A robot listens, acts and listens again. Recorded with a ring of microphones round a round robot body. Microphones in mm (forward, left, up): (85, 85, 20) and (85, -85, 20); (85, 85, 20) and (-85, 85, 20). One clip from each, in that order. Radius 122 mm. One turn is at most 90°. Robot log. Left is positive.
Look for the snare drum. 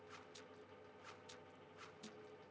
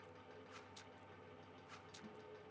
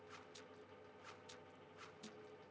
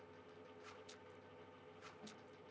cmd idle
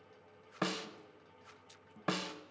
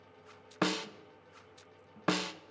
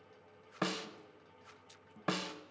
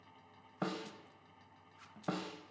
note: The snare drum: 40° right.
cmd yaw -40
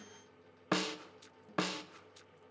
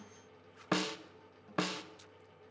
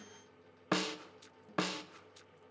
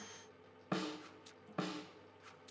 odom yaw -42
end: Found it: a snare drum, straight ahead.